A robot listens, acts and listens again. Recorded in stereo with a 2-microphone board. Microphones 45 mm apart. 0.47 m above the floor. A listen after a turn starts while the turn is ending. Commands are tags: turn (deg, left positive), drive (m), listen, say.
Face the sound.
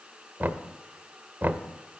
<turn deg="-50"/>
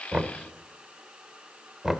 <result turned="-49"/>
<turn deg="-10"/>
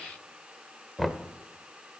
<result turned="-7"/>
<say>Found it: knocking, straight ahead.</say>